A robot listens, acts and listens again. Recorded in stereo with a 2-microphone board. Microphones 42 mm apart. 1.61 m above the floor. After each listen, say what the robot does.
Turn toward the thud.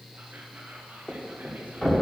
Turn 30° left.
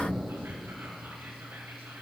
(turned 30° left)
Keep listening.
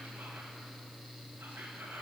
I heard a thud, but can't make it out now. It was about 20° right or 140° left.